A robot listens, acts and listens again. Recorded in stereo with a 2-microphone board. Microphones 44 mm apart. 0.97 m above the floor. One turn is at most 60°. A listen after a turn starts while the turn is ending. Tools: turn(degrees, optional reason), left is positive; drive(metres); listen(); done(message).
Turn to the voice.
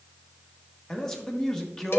turn(degrees=30)
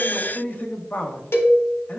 turn(degrees=60, reason="So it is at 140° left.")
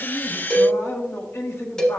turn(degrees=60, reason="The man speaking is now 80° left.")
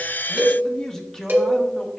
turn(degrees=10, reason="The man speaking is now 10° left.")
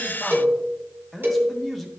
done("Found it: a man speaking, straight ahead.")